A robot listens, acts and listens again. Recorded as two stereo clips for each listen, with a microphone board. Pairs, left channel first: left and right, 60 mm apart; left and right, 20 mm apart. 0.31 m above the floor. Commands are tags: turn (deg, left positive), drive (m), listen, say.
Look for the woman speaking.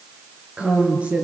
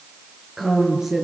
<turn deg="-25"/>
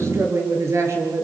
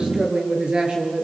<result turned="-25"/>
<turn deg="-125"/>
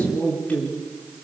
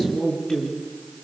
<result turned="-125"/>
<turn deg="30"/>
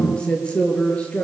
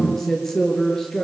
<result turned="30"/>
<turn deg="20"/>
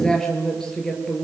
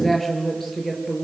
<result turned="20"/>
<turn deg="10"/>
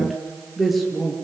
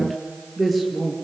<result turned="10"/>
<say>Facing the woman speaking.</say>